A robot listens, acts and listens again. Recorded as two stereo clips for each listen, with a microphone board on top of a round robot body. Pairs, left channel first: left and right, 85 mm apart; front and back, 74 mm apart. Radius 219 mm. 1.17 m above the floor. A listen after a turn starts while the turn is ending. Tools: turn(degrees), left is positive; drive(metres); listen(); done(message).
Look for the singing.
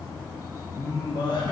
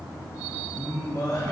turn(degrees=50)
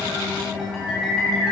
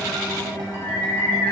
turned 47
done("Facing the singing.")